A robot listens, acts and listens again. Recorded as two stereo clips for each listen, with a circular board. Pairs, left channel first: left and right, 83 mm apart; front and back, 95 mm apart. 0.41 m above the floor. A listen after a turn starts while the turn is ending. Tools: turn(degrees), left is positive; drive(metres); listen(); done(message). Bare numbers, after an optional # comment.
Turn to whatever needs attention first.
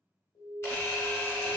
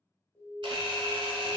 # The alarm: 70° left.
turn(70)
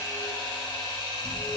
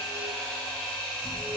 listen()
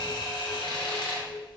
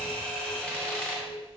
listen()
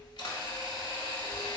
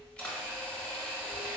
done("Facing where the alarm came from. I can't hear it now.")